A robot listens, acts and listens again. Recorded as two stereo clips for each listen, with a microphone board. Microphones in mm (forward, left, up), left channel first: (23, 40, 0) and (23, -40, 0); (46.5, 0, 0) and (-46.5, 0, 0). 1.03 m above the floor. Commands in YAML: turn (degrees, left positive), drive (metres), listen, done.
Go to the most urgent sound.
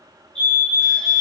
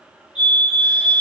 turn: 15
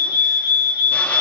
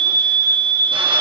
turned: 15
drive: 1.0
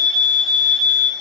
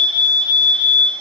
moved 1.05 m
turn: 10
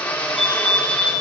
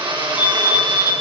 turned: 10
drive: 1.0
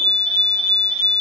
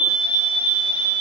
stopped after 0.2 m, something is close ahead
done: "Blocked. The fire alarm is further on, straight ahead."